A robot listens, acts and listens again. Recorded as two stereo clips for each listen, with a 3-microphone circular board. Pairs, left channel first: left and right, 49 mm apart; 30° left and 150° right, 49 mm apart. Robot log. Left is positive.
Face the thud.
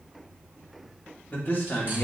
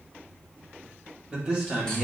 cmd idle
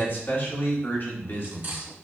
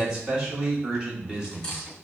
cmd idle
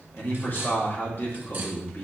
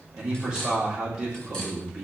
end: I can't make out a thud to turn to.